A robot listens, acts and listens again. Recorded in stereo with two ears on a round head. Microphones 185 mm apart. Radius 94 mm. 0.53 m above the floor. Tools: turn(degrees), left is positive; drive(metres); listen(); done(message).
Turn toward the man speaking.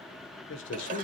turn(degrees=55)
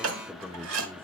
done("Facing the man speaking.")